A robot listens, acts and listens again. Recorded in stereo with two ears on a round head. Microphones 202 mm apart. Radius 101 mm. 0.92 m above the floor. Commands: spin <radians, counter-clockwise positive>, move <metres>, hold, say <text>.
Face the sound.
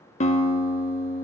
spin 0.52
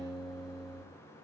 say Found it: a guitar, straight ahead, 1 to 2 m away.